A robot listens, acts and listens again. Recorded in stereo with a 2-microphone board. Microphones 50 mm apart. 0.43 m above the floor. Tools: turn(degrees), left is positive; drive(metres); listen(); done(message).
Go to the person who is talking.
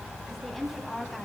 turn(degrees=30)
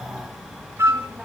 listen()
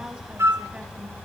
listen()
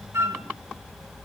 done("I heard a woman speaking, but can't make it out now. It was about 25° right or 145° left. I did not reach it.")